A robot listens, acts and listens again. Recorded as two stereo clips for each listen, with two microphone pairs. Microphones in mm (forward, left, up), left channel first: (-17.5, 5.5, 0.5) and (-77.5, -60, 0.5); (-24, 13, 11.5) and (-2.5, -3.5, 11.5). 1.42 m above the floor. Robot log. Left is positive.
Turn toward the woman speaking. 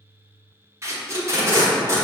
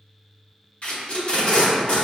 cmd idle
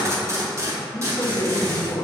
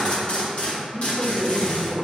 note: The woman speaking: 90° left.
cmd yaw +90
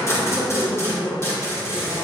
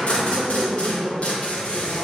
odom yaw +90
note: The woman speaking is now 15° right.
cmd yaw -15
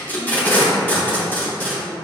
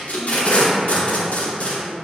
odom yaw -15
cmd idle
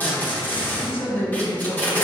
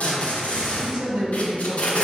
note: The woman speaking is now 15° right.
cmd yaw -15
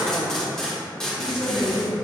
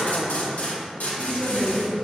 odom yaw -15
end: Found it: a woman speaking, straight ahead, 1 to 2 m away.